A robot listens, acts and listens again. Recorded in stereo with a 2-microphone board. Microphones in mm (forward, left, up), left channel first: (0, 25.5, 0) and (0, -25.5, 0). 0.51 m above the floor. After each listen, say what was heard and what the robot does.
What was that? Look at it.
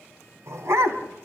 The dog barking: about 70° right or 110° right. Turn 70° right.
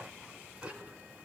So it is at 20° right. Turn 20° right.
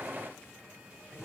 The dog barking is now 10° right. Turn 10° right.
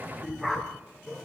Facing the dog barking, 2 to 4 m away.